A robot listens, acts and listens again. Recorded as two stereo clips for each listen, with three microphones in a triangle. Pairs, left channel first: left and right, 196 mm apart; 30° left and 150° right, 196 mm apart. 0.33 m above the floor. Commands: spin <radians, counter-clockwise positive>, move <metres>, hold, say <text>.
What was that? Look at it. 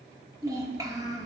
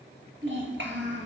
spin -2.79
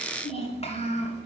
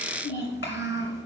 spin 0.61
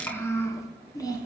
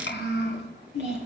spin 0.35
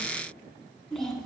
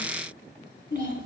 say Facing the child speaking.